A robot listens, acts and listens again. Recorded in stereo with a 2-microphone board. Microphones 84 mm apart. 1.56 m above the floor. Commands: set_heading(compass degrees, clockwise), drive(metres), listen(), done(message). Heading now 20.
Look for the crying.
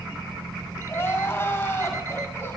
set_heading(355)
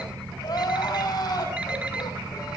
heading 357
set_heading(227)
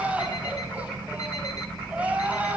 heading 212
set_heading(227)
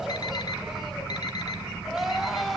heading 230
done("Facing the crying.")